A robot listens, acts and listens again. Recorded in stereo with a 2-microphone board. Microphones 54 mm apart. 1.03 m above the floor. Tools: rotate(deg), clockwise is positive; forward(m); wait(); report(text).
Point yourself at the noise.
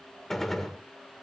rotate(-30)
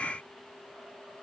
wait()
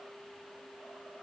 report("I heard a gunshot, but can't make it out now. It was about 25° right or 145° left.")